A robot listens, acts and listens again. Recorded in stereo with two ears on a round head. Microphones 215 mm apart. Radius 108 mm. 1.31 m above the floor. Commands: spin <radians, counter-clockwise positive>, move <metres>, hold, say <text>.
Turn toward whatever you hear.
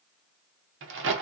spin -0.96
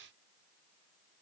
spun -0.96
hold
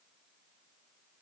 say I heard a crack, but can't make it out now. It was about straight ahead or 70° right.